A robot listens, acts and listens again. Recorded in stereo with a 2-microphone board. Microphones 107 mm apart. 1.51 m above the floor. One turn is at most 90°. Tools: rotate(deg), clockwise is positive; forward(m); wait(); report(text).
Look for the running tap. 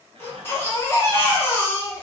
wait()
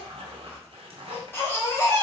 wait()
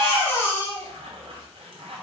report("I can't make out a running tap to turn to.")